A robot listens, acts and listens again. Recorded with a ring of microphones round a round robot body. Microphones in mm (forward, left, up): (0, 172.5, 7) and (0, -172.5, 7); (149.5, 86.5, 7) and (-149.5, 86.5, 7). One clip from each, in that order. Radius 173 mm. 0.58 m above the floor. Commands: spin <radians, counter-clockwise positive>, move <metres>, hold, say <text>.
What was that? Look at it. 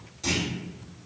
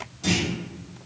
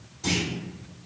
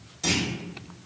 spin 3.05
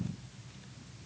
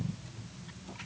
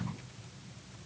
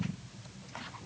say Facing where the clunk came from. I can't hear it now.